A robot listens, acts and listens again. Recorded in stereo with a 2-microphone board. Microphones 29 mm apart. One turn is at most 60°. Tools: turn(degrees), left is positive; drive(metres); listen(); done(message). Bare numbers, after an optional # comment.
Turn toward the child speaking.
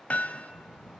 # The child speaking: about 60° left or 120° left.
turn(60)
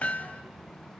done("Found it: a child speaking, straight ahead.")